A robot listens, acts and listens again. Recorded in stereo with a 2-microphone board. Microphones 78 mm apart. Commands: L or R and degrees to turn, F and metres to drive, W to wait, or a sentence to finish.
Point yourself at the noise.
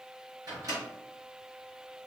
R50
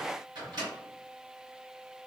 R80
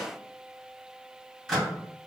Found it: a microwave, straight ahead, 1 to 2 m away.